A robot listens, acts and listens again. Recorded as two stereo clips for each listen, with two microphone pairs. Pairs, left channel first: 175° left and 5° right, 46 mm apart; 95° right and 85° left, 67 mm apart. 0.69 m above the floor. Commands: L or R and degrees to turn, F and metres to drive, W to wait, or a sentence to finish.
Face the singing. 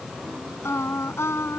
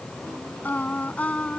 R170
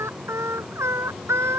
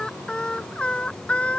R25
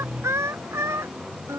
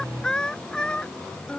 R20
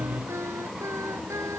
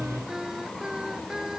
Facing the singing.